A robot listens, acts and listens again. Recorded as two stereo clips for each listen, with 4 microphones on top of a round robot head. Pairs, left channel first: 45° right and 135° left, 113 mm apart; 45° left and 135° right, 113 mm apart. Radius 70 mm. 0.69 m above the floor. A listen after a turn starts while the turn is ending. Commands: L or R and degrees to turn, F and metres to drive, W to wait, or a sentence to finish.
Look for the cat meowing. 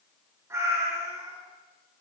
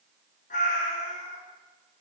L70
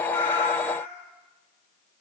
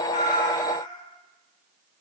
R15
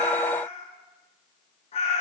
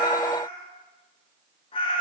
Found it: a cat meowing, straight ahead.